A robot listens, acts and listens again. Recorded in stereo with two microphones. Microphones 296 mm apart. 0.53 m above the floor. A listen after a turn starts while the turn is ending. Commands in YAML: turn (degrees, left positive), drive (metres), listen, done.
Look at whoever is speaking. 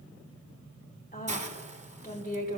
turn: 30
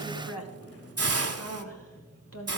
turn: 115
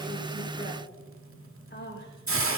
turn: 40
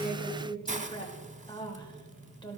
turn: 15
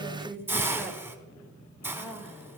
done: "Found it: a woman speaking, straight ahead, 2 to 4 m away."